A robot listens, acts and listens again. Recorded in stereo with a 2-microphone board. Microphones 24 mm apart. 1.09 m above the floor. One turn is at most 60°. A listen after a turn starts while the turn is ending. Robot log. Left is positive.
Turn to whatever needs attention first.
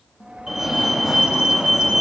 note: The fire alarm: about 20° right or 160° right.
cmd yaw -20
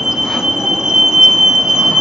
note: So it is at 140° right.
cmd yaw -60
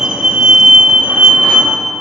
note: The fire alarm is now 85° right.
cmd yaw -60
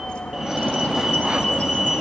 note: The fire alarm is now 15° right.
cmd yaw -15
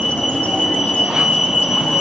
end: Facing the fire alarm.